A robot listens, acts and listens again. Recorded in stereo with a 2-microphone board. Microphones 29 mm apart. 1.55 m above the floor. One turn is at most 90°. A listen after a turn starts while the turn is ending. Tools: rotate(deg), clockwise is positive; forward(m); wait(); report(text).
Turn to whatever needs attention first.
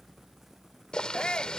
rotate(-30)
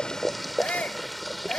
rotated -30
rotate(-90)
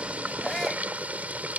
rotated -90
rotate(-25)
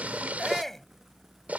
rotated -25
rotate(-10)
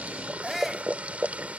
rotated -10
report("Facing the shout.")